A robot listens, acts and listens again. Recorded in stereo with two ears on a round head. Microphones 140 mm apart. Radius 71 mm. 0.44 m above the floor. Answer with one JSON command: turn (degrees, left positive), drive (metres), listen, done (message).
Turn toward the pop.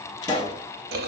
{"turn": 25}
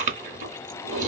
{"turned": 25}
{"listen": true}
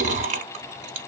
{"done": "I heard a pop, but can't make it out now. It was about straight ahead or 130° left."}